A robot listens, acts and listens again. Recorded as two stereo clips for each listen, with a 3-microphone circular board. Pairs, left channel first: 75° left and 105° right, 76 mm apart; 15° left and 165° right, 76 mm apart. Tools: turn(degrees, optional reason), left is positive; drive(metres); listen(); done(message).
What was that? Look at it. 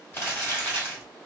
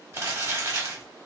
turn(degrees=140, reason="The crumpling: 140° left.")
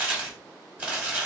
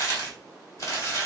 turn(degrees=-30, reason="The crumpling is now 30° right.")
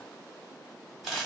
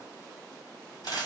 turn(degrees=-15, reason="The crumpling is now 15° right.")
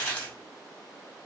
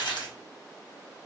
done("Facing the crumpling, 1 to 2 m away.")